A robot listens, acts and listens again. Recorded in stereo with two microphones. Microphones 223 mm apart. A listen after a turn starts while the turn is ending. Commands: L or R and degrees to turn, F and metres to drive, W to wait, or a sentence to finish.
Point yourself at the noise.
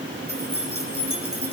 R90
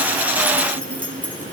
L10
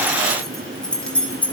Found it: keys jangling, straight ahead, 2 to 4 m away.